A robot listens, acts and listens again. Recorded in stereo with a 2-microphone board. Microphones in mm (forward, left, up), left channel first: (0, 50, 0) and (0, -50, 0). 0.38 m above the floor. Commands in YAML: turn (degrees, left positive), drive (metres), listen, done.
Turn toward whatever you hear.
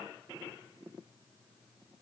listen: true
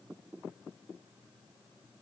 listen: true
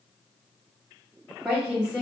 turn: -30
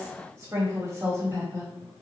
turn: -145
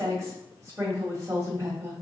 turn: -40
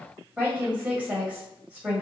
turn: -15
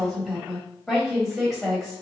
done: "Found it: a woman speaking, straight ahead, 1 to 2 m away."